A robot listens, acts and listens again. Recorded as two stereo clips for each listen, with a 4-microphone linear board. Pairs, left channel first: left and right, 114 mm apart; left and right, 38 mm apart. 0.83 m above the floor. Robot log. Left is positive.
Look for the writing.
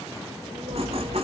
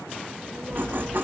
note: The writing: about 60° right or 120° right.
cmd yaw -60
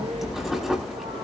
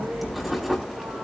end: Facing the writing.